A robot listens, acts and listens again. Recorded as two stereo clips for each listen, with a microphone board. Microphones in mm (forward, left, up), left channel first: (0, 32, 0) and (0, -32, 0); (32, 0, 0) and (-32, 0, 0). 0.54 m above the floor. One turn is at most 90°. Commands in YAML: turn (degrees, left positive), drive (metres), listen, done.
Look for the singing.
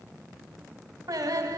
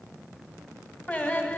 turn: -65
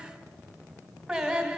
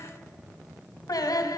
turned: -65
done: "Found it: singing, straight ahead."